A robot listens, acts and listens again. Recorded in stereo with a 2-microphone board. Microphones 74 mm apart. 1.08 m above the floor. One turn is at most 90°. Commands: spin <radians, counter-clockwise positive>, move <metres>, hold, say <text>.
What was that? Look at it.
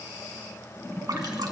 spin -1.05
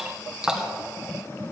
spin -0.17
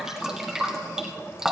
say Found it: dripping, straight ahead, 1 to 2 m away.